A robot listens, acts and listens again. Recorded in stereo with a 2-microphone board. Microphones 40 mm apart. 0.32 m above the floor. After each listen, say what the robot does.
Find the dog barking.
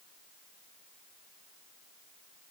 Keep listening.
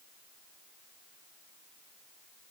Keep listening.
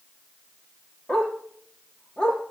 Turn 15° left.
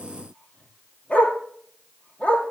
Turn 150° left.
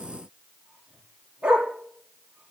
Turn 20° right.
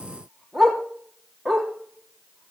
Facing the dog barking, 2 to 4 m away.